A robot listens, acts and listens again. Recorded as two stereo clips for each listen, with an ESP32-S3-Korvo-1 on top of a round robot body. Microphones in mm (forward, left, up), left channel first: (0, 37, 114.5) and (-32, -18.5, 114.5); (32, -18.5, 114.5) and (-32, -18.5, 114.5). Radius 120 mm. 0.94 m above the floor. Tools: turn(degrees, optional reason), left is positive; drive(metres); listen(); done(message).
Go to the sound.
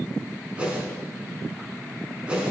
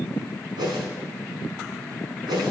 turn(degrees=165, reason="The whoosh: 165° left.")
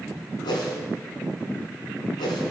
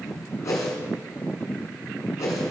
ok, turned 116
turn(degrees=50, reason="The whoosh is now 50° left.")
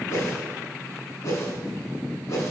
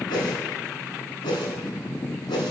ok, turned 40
turn(degrees=10, reason="The whoosh is now 10° left.")
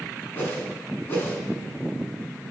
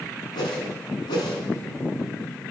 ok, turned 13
drive(metres=1.0)
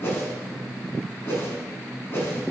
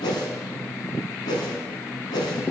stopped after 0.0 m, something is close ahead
done("Something is in my way. I am facing the whoosh but have not reached it.")